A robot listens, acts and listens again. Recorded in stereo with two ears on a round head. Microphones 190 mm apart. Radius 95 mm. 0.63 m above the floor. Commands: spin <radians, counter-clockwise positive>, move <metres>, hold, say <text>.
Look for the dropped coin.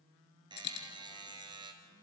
spin 0.96
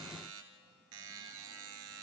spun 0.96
hold
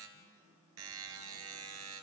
say I heard a dropped coin, but can't make it out now. It was about straight ahead or 70° left.